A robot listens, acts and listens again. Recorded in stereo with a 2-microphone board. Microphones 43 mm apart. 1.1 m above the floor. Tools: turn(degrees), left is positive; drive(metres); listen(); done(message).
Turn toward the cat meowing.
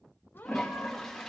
turn(degrees=55)
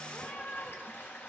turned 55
turn(degrees=65)
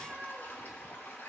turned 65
done("Facing the cat meowing, 2 to 4 m away.")